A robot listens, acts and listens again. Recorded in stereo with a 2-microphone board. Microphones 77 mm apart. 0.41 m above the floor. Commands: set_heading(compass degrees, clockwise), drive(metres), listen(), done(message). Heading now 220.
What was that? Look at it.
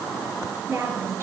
set_heading(255)
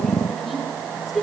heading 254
done("Found it: a woman speaking, straight ahead.")